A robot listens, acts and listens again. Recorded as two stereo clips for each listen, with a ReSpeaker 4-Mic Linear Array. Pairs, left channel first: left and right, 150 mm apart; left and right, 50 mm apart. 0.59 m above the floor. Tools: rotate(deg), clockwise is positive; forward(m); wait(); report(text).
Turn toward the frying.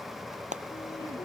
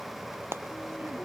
rotate(50)
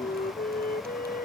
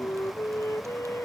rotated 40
wait()
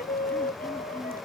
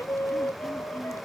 wait()
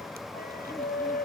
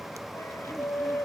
report("I heard frying, but can't make it out now. It was about 10° right or 90° right.")